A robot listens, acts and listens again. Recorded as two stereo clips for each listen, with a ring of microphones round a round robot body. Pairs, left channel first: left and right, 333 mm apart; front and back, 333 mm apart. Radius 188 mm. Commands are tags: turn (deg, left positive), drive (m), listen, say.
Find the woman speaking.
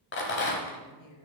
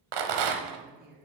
<turn deg="120"/>
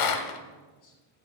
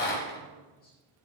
<listen/>
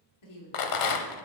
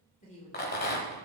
<turn deg="70"/>
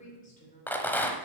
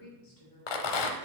<turn deg="25"/>
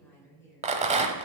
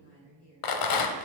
<turn deg="10"/>
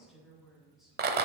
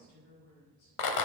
<say>Facing the woman speaking.</say>